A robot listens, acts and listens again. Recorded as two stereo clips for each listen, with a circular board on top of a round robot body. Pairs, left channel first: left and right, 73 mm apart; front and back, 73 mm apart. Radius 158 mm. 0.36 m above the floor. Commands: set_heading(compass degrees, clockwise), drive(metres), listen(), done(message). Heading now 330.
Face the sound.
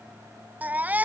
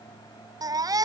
set_heading(125)
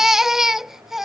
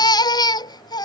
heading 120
done("Facing the baby crying.")